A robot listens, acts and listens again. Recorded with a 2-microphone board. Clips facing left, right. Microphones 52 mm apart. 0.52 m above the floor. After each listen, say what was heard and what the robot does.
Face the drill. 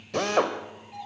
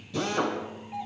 The drill: about 70° left or 110° left. Turn 70° left.
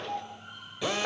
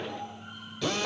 So it is at 20° left. Turn 20° left.
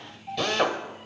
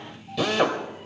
Found it: a drill, straight ahead.